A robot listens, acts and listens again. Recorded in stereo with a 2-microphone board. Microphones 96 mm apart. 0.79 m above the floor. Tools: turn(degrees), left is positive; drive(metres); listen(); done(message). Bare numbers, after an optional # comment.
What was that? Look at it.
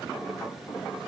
listen()
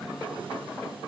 listen()
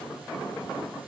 done("I can't make out anything.")